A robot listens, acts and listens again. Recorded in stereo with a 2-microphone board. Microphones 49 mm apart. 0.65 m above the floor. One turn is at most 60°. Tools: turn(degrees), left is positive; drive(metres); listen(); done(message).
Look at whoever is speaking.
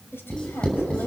turn(degrees=45)
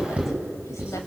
listen()
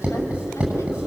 listen()
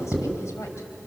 done("I heard a woman speaking, but can't make it out now. It was about straight ahead or 90° left.")